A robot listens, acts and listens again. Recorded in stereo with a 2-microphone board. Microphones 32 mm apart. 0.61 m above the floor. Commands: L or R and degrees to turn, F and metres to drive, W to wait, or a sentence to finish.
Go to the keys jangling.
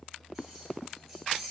R30
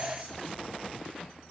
W
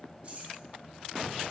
R145
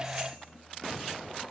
W
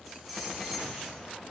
W
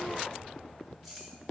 Facing where the keys jangling came from. I can't hear it now. I did not reach it.